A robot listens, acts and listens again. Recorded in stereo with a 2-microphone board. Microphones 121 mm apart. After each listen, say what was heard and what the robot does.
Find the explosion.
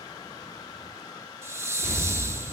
The explosion: about 60° right or 120° right. Turn 60° right.
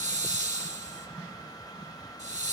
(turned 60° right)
Keep listening.
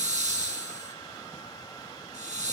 I heard an explosion, but can't make it out now. It was about straight ahead or 60° right.